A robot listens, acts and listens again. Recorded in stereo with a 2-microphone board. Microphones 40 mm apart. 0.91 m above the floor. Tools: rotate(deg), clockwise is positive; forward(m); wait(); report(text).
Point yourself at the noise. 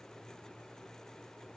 wait()
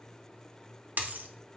rotate(45)
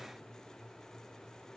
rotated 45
wait()
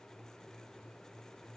report("I heard a dropped coin, but can't make it out now. It was about straight ahead or 90° right.")